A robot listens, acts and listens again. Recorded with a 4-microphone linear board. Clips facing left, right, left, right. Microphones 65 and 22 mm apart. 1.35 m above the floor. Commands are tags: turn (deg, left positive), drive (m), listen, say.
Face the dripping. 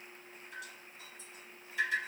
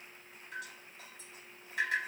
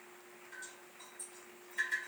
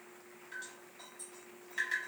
<turn deg="-70"/>
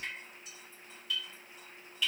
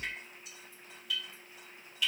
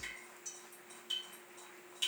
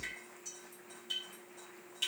<say>Found it: dripping, straight ahead.</say>